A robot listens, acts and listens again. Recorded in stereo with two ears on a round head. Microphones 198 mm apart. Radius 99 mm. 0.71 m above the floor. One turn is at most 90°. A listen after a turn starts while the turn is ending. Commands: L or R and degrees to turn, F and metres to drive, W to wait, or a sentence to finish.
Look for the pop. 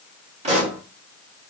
R30
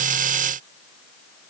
W
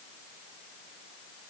I heard a pop, but can't make it out now. It was about straight ahead or 120° right.